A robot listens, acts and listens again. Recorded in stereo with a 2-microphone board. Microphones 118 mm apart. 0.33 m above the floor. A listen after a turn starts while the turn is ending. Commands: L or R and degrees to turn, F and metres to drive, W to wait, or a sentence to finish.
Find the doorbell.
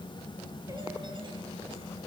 W
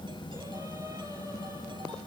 W
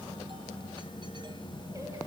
I can't make out a doorbell.